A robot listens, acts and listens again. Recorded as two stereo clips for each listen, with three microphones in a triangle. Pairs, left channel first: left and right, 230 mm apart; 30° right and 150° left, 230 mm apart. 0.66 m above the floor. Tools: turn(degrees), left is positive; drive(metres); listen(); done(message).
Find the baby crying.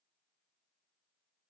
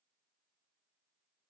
listen()
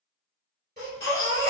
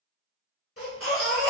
turn(degrees=-45)
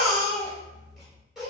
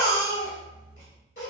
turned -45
done("Found it: a baby crying, straight ahead.")